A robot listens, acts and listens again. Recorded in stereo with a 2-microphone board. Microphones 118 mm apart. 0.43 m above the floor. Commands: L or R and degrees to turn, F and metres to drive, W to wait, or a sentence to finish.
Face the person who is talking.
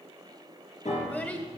L30
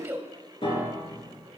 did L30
R15
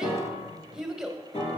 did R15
Found it: a child speaking, straight ahead.